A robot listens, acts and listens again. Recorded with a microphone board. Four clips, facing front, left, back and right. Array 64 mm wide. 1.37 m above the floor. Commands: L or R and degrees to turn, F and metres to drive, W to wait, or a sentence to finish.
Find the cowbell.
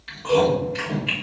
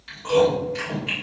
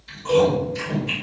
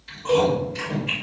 R90
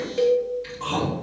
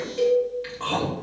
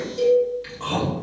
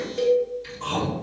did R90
Facing the cowbell, 1 to 2 m away.